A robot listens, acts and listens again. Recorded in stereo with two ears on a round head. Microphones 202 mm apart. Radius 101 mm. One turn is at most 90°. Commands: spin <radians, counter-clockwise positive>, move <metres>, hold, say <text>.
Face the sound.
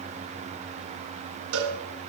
spin -1.05
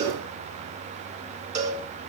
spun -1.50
spin -0.61
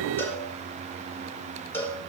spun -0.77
spin 0.17
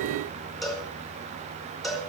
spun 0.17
say Found it: a cowbell, straight ahead.